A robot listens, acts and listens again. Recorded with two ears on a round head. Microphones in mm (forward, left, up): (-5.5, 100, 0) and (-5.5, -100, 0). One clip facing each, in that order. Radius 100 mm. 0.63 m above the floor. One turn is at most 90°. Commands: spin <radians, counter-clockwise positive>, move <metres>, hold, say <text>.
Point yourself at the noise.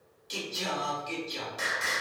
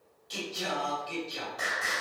spin 0.61
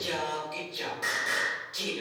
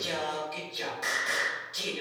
say Facing the singing.